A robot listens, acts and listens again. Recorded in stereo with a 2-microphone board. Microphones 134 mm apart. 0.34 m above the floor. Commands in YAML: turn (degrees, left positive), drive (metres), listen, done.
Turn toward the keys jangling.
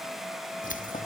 turn: 90
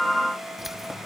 done: "Found it: keys jangling, straight ahead."